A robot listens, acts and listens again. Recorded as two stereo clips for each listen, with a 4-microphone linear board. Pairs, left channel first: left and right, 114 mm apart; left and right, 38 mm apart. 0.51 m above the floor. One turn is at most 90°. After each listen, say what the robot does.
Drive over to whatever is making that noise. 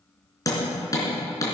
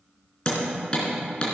Turn 30° left.
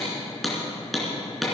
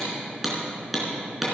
Drive 1.0 m forward.
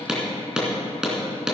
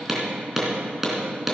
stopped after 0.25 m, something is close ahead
Something is in my way. I am facing the hammering but have not reached it.